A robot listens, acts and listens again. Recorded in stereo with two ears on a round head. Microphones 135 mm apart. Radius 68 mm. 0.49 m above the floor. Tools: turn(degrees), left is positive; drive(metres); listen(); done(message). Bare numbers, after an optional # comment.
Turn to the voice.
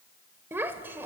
turn(-30)
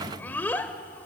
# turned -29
# So it is at 15° left.
turn(15)
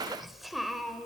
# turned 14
done("Found it: a child speaking, straight ahead, 1 to 2 m away.")